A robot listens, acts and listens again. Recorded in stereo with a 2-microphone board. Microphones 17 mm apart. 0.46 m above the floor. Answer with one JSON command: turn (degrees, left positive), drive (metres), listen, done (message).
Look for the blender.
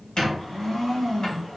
{"turn": 55}
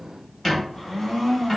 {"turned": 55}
{"turn": 55}
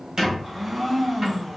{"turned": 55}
{"turn": -10}
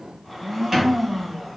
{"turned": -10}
{"done": "Facing the blender, 1 to 2 m away."}